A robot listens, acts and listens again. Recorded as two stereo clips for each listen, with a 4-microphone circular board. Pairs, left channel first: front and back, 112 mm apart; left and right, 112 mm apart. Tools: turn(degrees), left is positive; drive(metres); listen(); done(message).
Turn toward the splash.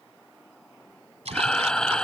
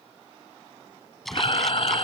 turn(degrees=180)
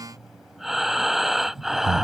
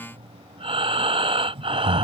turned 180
done("Facing where the splash came from. I can't hear it now.")